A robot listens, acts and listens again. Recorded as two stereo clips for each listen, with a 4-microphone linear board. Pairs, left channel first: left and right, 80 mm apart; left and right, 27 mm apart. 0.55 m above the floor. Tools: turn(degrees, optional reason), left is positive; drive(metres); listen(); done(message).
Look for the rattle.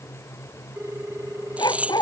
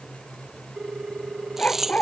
turn(degrees=-15, reason="The rattle: about 15° right or 165° right.")
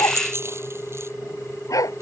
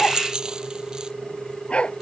turn(degrees=-150, reason="So it is at 150° right.")
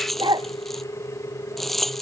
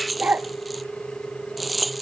done("Found it: a rattle, straight ahead.")